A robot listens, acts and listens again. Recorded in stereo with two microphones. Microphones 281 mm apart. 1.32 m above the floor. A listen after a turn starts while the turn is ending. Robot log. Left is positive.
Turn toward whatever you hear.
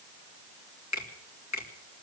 note: The finger snap: about 70° left or 110° left.
cmd yaw +70
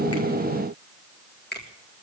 note: So it is at 35° left.
cmd yaw +35
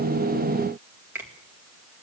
note: The finger snap is now 10° right.
cmd yaw -10
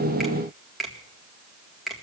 end: Facing the finger snap.